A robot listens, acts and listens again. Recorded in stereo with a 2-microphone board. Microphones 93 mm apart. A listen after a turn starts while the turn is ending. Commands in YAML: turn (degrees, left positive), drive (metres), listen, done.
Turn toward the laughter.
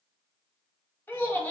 turn: 15
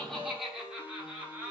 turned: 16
turn: -20
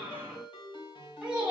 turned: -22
turn: -15
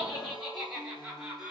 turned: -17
done: "Found it: laughter, straight ahead."